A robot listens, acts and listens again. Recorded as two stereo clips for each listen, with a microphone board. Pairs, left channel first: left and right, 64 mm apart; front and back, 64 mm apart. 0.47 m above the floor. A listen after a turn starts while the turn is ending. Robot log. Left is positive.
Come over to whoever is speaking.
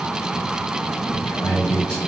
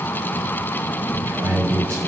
note: The man speaking: 160° left.
cmd yaw +160
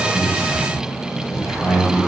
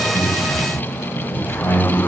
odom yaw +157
cmd fwd 1.0
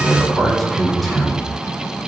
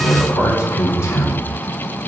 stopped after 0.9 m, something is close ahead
end: I am next to the man speaking.